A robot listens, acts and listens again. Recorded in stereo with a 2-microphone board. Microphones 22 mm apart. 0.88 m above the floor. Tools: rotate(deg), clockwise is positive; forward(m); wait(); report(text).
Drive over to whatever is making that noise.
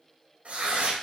rotate(90)
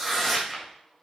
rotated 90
forward(1.0)
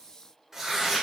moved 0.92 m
rotate(15)
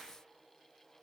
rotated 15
wait()
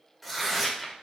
forward(1.0)
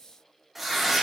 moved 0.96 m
forward(1.0)
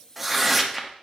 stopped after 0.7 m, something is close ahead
report("I am next to the tearing paper.")